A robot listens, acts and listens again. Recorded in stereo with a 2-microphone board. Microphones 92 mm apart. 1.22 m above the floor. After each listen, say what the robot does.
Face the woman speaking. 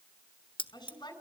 Turn 50° left.
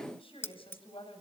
Turn 80° left.
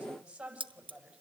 Turn 10° right.
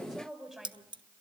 Facing the woman speaking.